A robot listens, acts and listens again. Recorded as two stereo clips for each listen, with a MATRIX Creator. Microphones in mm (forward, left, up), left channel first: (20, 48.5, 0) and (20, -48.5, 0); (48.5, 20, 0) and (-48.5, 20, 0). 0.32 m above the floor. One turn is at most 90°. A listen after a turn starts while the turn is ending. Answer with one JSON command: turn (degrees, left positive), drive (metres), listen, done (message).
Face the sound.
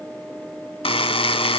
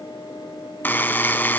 {"turn": 70}
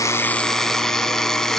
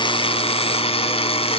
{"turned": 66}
{"done": "Found it: a buzzer, straight ahead."}